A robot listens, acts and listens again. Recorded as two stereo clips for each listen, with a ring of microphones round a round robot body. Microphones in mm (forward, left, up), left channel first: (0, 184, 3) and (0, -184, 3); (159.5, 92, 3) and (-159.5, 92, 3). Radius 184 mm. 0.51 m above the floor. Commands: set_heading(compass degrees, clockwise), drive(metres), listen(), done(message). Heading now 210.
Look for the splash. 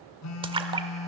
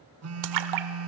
set_heading(15)
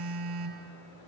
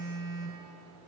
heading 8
done("I heard a splash from this way, but can't make it out now.")